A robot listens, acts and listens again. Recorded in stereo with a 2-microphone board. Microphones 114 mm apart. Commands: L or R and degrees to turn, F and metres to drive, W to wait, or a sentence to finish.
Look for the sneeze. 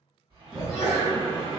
R30
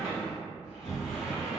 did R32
W
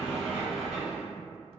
I heard a sneeze, but can't make it out now. It was about 30° left or 145° right.